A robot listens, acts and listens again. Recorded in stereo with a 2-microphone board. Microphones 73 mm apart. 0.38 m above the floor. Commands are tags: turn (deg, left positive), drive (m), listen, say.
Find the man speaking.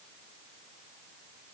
<listen/>
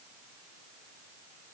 <listen/>
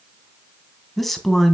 <turn deg="30"/>
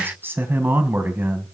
<turn deg="-30"/>
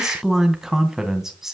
<say>Facing the man speaking, 2 to 4 m away.</say>